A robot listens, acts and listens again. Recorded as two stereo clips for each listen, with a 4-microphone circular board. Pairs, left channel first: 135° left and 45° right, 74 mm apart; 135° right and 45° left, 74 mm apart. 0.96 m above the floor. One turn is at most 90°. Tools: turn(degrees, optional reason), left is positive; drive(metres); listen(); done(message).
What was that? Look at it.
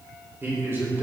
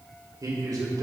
turn(degrees=10, reason="The man speaking: 10° left.")
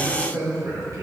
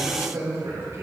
done("Facing the man speaking.")